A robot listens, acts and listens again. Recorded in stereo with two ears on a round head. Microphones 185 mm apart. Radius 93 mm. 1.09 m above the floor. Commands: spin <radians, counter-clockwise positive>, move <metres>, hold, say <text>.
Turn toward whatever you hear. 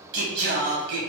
spin -1.05
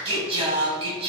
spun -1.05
spin -0.61
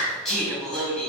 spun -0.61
say Facing the singing, 1 to 2 m away.